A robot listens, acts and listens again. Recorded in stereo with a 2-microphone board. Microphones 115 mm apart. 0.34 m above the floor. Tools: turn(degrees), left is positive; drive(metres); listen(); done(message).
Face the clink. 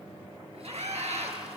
listen()
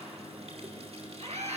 listen()
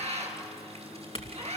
turn(degrees=60)
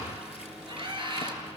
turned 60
listen()
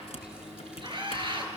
listen()
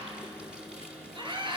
done("I heard a clink, but can't make it out now. It was about straight ahead or 60° left.")